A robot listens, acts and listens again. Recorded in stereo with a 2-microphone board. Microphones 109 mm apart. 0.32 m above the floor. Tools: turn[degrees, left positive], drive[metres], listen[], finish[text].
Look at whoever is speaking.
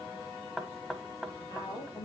Thought: The woman speaking: about 40° left or 140° left.
Action: turn[40]
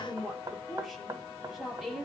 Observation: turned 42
Action: finish[Found it: a woman speaking, straight ahead, over 4 m away.]